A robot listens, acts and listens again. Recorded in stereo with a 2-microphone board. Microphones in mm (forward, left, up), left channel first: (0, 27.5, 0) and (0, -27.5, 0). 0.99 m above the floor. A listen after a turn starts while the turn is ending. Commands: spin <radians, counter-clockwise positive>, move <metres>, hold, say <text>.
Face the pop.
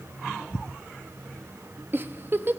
hold
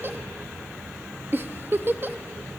hold
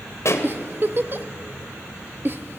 spin 1.05
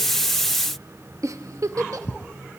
hold
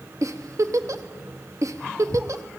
say I heard a pop, but can't make it out now. It was about straight ahead or 60° left.